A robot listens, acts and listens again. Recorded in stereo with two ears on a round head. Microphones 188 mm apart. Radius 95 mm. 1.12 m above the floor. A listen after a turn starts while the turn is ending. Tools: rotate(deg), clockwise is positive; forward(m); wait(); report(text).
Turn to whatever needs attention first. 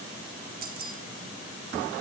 wait()
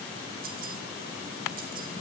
wait()
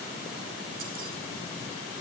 report("I can't make out anything urgent to turn to.")